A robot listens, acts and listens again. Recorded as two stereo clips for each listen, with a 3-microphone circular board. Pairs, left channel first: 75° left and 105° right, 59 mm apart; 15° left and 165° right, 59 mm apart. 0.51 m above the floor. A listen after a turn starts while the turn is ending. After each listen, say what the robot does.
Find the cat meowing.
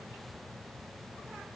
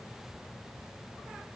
Keep listening.
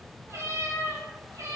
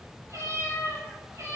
Turn 130° right.
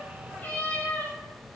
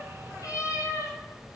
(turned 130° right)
Turn 25° left.
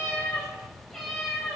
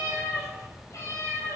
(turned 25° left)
Facing the cat meowing, over 4 m away.